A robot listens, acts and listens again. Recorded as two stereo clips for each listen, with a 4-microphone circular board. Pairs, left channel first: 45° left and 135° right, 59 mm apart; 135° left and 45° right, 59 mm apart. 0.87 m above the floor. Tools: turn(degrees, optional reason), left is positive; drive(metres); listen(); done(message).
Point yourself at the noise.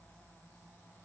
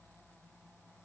listen()
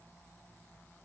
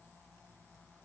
listen()
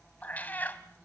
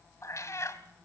turn(degrees=100, reason="The cat meowing: 100° left.")
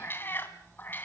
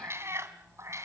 turn(degrees=-10, reason="The cat meowing is now 10° right.")
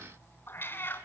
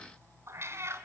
done("Facing the cat meowing, 2 to 4 m away.")